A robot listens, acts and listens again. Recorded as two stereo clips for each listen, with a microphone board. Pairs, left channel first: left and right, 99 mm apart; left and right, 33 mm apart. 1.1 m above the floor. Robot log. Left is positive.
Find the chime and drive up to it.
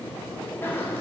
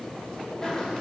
cmd idle
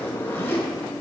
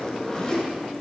cmd idle
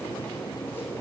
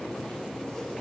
end: I can't make out a chime to turn to.